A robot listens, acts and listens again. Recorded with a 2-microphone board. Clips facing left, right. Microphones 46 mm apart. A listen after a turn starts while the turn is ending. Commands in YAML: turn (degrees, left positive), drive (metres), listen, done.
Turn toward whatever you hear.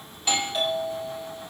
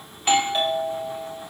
turn: -35
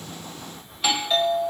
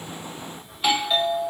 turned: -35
done: "Found it: a doorbell, straight ahead, 2 to 4 m away."